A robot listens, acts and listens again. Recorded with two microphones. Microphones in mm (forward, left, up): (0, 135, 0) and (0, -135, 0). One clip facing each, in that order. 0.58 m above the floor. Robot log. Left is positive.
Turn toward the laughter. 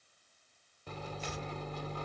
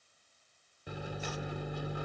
cmd idle
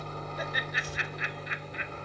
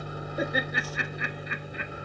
note: The laughter: about 60° right or 120° right.
cmd yaw -60
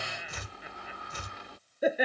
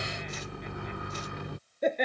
end: Facing the laughter.